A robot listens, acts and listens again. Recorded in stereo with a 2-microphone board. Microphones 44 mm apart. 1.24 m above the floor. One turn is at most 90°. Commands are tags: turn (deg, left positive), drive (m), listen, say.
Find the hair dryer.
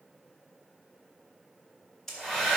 <turn deg="30"/>
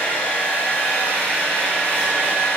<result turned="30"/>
<turn deg="90"/>
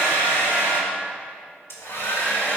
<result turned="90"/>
<turn deg="65"/>
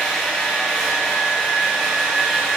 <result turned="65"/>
<turn deg="-10"/>
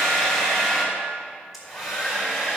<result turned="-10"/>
<say>Facing the hair dryer, 2 to 4 m away.</say>